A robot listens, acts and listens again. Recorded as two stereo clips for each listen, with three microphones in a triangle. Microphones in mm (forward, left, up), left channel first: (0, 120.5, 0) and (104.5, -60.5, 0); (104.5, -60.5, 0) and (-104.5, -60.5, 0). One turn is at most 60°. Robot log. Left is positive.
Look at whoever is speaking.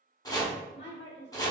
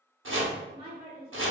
note: The woman speaking: 125° left.
cmd yaw +60
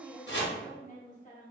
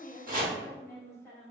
note: The woman speaking is now 75° left.
cmd yaw +60
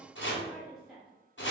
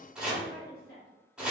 note: The woman speaking is now 30° left.
cmd yaw +30
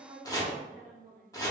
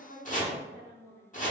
note: The woman speaking is now 20° right.
cmd yaw -20
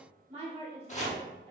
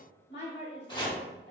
end: Facing the woman speaking.